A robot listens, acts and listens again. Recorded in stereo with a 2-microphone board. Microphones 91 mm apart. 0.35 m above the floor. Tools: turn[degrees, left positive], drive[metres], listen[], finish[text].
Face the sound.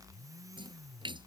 Thought: The splash: about 60° right or 120° right.
Action: turn[-60]
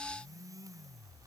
Action: listen[]
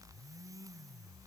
Action: finish[I heard a splash, but can't make it out now. It was about straight ahead or 60° right.]